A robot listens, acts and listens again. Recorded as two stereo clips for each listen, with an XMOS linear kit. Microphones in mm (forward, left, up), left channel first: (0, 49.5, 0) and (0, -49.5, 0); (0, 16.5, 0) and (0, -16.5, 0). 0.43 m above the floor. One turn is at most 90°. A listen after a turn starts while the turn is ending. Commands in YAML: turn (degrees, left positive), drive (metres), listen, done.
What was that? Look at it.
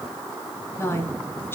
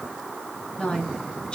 turn: 25
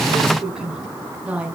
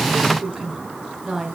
turn: -15
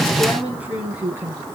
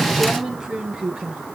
turn: -20
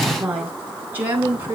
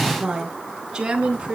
turn: -25
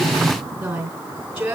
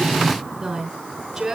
done: "Facing the woman speaking."